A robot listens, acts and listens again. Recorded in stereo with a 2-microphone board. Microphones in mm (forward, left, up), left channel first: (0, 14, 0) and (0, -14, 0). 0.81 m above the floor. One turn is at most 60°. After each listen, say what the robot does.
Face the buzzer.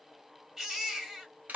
Keep listening.
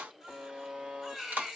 Turn 40° right.
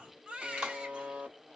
Turn 60° right.
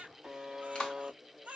Turn 20° right.
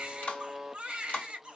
Facing the buzzer.